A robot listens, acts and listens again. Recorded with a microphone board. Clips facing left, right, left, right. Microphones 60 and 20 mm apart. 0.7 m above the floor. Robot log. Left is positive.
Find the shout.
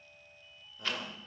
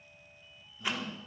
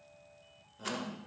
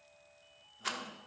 note: The shout: about 65° left or 115° left.
cmd yaw +65
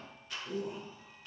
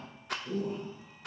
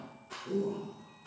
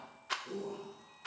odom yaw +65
end: Facing the shout, 2 to 4 m away.